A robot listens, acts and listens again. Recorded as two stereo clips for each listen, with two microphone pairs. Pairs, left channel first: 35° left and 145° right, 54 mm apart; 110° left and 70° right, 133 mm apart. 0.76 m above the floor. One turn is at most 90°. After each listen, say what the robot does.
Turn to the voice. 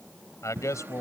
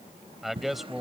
Turn 20° left.
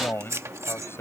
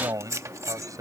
Found it: a man speaking, straight ahead.